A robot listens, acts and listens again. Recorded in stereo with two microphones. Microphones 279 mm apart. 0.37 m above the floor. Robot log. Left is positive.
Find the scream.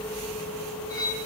cmd idle
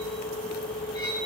cmd idle
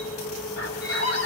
note: The scream: about 55° left or 125° left.
cmd yaw +55
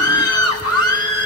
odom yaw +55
note: So it is at 65° left.
cmd yaw +65
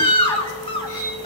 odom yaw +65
note: The scream is now 20° left.
cmd yaw +20
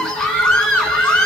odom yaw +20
end: Facing the scream, 2 to 4 m away.